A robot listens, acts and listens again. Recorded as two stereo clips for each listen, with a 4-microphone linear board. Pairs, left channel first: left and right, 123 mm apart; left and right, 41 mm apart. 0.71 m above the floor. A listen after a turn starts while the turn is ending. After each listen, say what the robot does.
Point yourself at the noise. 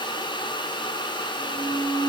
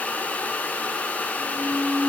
Turn 20° left.
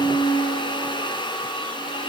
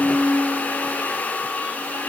Turn 135° left.
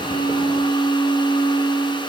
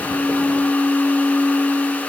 Turn 40° left.
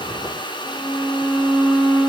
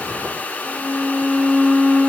Facing the violin.